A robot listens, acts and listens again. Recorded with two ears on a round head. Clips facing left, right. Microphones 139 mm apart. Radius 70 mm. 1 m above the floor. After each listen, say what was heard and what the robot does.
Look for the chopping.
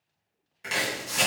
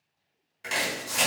Turn 30° left.
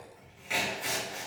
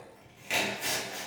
So it is at 30° right. Turn 30° right.
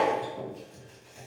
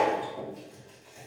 Facing the chopping, 1 to 2 m away.